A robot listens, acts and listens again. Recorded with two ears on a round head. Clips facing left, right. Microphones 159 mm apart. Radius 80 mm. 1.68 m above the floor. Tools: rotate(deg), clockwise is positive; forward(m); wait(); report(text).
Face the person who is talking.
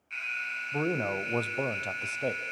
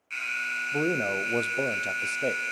rotate(20)
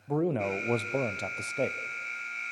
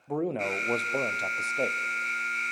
report("Facing the man speaking.")